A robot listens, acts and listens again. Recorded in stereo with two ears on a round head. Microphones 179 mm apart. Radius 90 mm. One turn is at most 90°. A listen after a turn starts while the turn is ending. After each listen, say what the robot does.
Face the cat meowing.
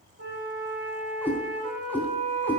Turn 30° left.
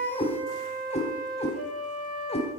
Turn 90° left.
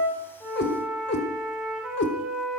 Turn 60° left.
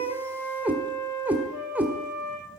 Turn 10° right.
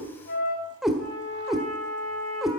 Facing the cat meowing, 1 to 2 m away.